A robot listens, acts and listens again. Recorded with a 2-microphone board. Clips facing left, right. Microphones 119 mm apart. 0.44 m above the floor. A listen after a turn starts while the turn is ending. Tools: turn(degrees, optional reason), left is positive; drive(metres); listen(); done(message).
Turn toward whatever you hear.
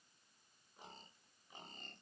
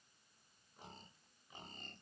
listen()
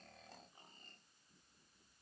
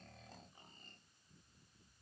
listen()
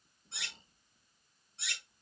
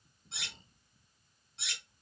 turn(degrees=-70, reason="The cutlery clinking: about 70° right or 110° right.")
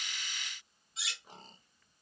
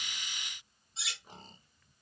turn(degrees=-30, reason="So it is at 30° right.")
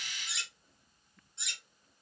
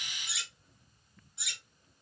done("Facing the cutlery clinking, 1 to 2 m away.")